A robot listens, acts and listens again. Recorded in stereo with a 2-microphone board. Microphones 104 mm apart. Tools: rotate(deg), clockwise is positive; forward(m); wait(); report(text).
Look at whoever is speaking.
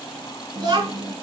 rotate(45)
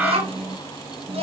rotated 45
rotate(90)
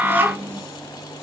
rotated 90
rotate(20)
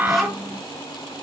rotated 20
report("Facing the child speaking.")